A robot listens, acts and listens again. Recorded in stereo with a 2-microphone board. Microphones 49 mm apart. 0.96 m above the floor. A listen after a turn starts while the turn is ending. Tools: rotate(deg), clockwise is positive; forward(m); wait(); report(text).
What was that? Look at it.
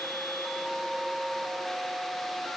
wait()
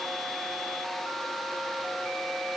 wait()
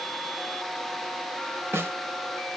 rotate(55)
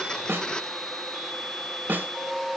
rotate(50)
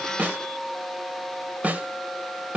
rotate(40)
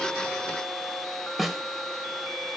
report("Found it: a snare drum, straight ahead, 1 to 2 m away.")